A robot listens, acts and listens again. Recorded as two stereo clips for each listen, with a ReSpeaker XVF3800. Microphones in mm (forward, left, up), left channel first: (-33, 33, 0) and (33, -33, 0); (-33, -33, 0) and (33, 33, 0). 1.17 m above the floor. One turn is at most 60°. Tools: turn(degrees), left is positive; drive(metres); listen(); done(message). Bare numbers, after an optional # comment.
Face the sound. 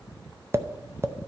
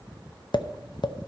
# The tapping: 105° right.
turn(-60)
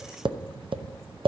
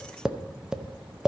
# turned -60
# The tapping is now 35° right.
turn(-35)
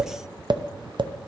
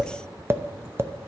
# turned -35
# The tapping is now 15° right.
turn(-15)
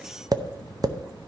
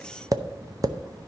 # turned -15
done("Found it: tapping, straight ahead.")